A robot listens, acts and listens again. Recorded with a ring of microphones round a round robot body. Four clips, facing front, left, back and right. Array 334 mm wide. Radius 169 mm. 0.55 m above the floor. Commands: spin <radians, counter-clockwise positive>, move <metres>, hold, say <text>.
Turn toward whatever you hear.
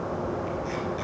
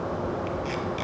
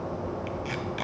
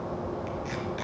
spin 2.97
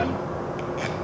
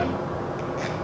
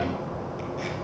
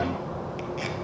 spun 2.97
spin -0.17
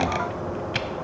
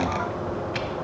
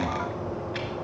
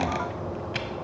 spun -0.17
say Found it: tape being pulled, straight ahead, 1 to 2 m away.